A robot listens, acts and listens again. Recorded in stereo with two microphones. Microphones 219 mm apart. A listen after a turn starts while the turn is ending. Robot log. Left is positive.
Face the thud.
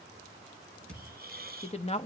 cmd yaw +30
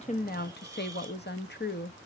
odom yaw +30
cmd idle
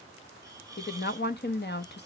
end: I heard a thud, but can't make it out now. It was about 25° right or 145° left.